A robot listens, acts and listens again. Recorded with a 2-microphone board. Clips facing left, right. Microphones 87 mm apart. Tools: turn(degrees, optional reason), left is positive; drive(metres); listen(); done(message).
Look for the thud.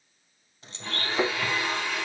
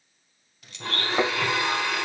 turn(degrees=-55, reason="The thud: about 55° right or 125° right.")
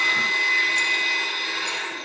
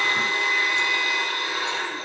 listen()
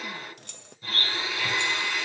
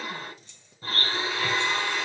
done("I heard a thud, but can't make it out now. It was about straight ahead or 70° right.")